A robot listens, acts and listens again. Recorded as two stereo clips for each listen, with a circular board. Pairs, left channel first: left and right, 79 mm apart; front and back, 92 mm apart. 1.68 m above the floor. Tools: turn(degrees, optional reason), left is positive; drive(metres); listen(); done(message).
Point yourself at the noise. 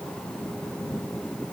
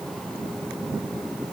listen()
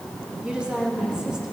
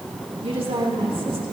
turn(degrees=-170, reason="The woman speaking: 170° right.")
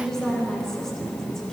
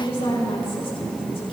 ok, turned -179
done("Facing the woman speaking, over 4 m away.")